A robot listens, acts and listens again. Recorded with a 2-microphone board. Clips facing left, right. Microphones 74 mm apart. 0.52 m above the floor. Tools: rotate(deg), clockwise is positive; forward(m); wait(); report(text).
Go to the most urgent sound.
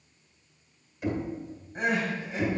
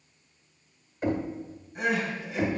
rotate(-35)
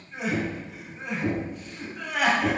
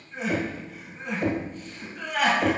forward(1.0)
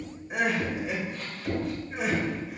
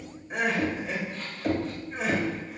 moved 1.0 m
forward(1.0)
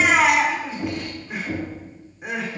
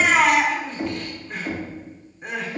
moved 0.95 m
rotate(-10)
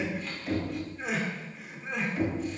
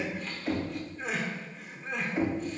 forward(1.0)
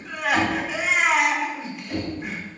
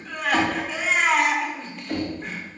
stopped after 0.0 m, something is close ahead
report("Arrived at the crying, straight ahead.")